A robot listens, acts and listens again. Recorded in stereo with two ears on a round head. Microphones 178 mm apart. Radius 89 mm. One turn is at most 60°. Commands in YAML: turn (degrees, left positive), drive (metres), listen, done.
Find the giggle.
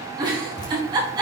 turn: -25
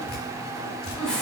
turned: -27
done: "Found it: a giggle, straight ahead."